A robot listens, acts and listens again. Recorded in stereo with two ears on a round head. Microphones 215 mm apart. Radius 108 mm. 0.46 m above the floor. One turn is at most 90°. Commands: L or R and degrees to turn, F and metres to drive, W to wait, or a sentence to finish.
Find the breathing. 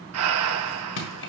R70
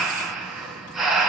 Found it: breathing, straight ahead.